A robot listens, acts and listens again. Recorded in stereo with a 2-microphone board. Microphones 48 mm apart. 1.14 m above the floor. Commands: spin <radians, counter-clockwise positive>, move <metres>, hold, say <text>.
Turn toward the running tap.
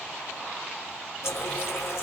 spin 1.22
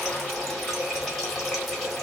say Found it: a running tap, straight ahead.